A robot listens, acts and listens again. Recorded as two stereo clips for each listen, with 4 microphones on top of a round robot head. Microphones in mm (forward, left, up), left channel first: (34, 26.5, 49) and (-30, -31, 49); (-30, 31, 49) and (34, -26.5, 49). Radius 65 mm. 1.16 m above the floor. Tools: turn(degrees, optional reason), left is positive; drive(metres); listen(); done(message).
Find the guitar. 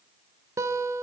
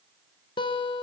turn(degrees=165, reason="The guitar: 165° left.")
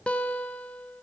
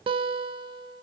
turn(degrees=-35, reason="The guitar is now 35° right.")
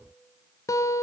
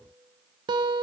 turn(degrees=-10, reason="The guitar is now 10° right.")
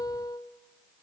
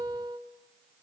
done("Facing the guitar, under 1 m away.")